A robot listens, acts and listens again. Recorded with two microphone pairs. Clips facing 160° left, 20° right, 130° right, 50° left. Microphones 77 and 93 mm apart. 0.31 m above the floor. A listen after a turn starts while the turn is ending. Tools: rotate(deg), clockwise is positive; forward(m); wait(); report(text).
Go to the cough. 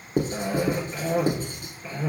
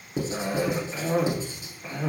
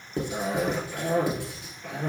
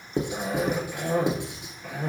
rotate(40)
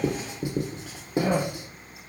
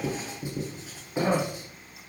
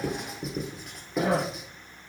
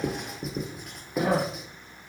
rotate(20)
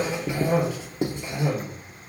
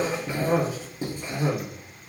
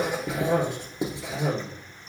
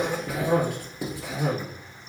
forward(1.0)
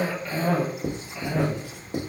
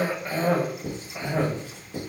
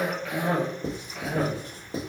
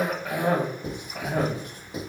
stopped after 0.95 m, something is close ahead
rotate(-10)
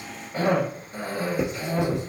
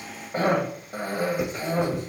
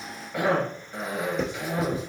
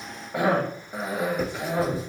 report("I am next to the cough.")